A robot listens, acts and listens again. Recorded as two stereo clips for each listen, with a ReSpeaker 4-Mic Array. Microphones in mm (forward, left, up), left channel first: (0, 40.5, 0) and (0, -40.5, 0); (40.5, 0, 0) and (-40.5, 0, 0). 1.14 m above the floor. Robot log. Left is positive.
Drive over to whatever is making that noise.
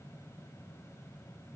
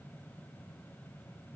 cmd idle
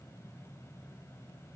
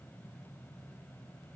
cmd idle
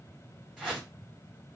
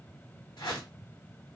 note: The whoosh: 10° right.
cmd yaw -10
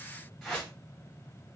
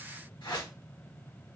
cmd fwd 1.0
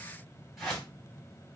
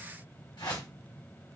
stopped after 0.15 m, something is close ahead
end: Blocked. The whoosh is further on, straight ahead.